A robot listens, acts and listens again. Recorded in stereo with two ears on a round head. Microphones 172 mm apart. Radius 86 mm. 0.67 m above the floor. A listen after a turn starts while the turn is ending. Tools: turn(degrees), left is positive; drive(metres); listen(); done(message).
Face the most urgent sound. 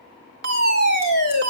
turn(degrees=-55)
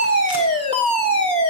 turn(degrees=-35)
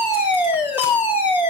turn(degrees=-10)
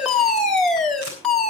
done("Found it: a fire alarm, straight ahead.")